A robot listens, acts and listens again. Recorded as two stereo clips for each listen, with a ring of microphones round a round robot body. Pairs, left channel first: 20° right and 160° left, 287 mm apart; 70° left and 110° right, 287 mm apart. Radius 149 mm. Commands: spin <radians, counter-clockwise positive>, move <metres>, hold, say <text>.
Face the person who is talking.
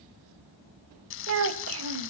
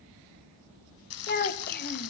spin 2.09
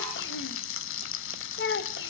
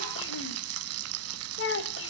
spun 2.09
spin 0.44
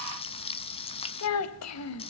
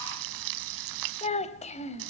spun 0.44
say Found it: a child speaking, straight ahead, 1 to 2 m away.